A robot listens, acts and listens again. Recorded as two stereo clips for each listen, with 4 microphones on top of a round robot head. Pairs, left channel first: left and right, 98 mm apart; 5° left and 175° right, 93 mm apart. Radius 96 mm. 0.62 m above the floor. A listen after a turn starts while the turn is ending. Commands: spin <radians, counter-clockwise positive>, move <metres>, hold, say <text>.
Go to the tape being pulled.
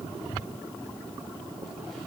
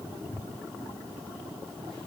hold
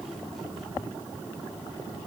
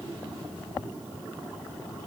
hold
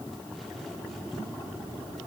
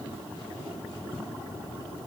say I can't make out tape being pulled to turn to.